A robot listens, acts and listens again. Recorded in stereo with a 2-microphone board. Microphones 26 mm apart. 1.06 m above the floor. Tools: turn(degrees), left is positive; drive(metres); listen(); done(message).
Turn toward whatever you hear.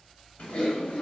turn(degrees=60)
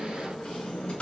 turn(degrees=55)
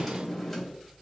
done("Found it: typing on a keyboard, straight ahead, 1 to 2 m away.")